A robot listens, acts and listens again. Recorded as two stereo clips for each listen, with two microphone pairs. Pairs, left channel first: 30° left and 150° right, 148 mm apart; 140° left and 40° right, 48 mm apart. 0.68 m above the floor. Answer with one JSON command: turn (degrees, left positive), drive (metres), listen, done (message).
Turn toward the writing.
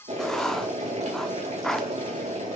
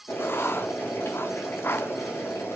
{"turn": 120}
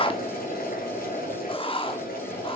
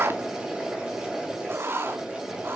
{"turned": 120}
{"turn": -15}
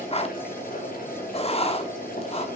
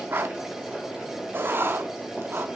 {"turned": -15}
{"turn": -10}
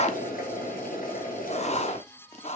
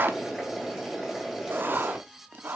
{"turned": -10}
{"done": "Found it: writing, straight ahead, 1 to 2 m away."}